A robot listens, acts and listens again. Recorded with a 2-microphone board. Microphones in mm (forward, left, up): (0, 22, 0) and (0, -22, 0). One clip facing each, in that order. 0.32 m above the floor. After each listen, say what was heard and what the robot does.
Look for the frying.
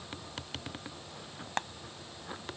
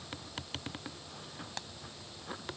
The frying: about 50° left or 130° left. Turn 50° left.
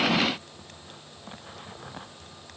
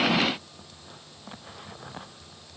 Keep listening.
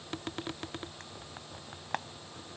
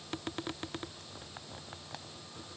So it is at 75° left. Turn 75° left.
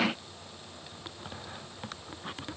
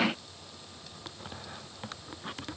Keep listening.
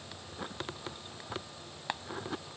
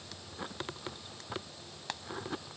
The frying is now 20° left. Turn 20° left.
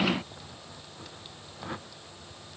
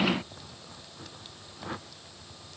Keep listening.
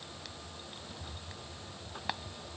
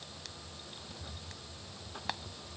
Found it: frying, straight ahead.